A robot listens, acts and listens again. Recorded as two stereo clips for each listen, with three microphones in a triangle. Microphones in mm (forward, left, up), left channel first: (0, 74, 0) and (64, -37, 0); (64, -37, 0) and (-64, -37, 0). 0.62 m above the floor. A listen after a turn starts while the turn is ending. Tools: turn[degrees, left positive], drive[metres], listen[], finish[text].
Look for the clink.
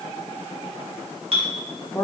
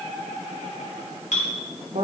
Thought: The clink: 20° right.
Action: turn[-20]
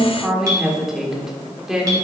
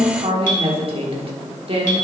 Action: listen[]
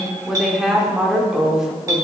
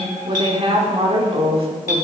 Action: finish[Facing the clink, 1 to 2 m away.]